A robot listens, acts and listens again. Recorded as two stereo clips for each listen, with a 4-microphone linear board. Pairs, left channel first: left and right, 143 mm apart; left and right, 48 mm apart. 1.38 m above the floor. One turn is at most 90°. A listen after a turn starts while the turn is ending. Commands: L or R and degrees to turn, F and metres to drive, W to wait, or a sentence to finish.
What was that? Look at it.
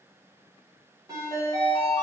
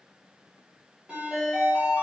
R25
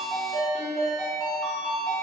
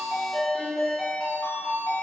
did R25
Found it: a ringtone, straight ahead, 1 to 2 m away.